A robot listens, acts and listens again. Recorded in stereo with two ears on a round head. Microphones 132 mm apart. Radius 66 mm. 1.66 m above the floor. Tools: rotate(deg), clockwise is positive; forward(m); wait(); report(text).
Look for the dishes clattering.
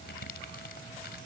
wait()
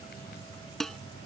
rotate(-30)
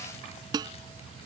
rotate(25)
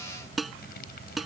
report("Facing the dishes clattering.")